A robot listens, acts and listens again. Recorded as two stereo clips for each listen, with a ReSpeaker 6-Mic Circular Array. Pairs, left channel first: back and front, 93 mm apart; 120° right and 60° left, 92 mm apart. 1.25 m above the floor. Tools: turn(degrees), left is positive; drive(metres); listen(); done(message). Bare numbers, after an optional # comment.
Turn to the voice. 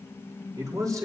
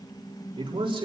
# The man speaking: 50° left.
turn(50)
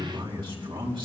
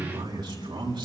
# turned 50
# The man speaking is now 30° left.
turn(30)
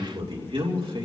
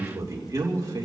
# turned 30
# The man speaking is now 10° left.
turn(10)
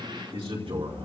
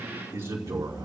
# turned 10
done("Found it: a man speaking, straight ahead.")